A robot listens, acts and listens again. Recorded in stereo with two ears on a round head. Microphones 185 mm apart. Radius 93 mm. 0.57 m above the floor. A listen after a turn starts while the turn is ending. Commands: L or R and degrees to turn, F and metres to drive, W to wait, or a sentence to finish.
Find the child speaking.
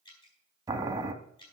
W
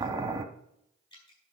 W
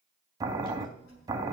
L90
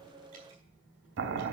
R10
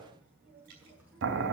R10
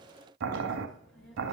Facing the child speaking.